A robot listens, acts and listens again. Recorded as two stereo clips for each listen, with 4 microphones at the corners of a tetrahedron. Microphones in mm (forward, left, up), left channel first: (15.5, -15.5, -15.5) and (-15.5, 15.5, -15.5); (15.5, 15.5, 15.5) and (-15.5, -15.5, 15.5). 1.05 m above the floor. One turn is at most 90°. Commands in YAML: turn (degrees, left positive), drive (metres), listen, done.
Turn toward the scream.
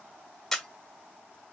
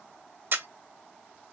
listen: true
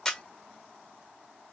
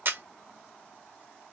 listen: true
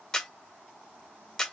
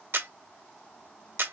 done: "I can't make out a scream, only a camera shutter."